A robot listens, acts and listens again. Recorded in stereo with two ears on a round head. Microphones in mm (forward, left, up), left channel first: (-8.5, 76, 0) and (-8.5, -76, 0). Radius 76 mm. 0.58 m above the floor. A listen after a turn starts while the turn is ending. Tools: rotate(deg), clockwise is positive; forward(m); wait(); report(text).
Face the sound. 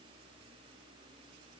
wait()
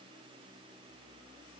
wait()
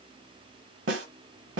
rotate(90)
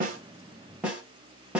report("Found it: a snare drum, straight ahead, 1 to 2 m away.")